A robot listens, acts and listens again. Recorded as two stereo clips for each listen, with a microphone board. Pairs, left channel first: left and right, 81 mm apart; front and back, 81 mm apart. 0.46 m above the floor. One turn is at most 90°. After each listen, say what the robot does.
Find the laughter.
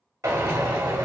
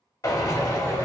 Turn 90° right.
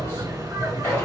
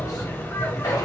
Turn 55° right.
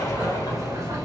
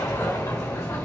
Turn 45° right.
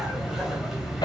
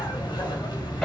Found it: laughter, straight ahead.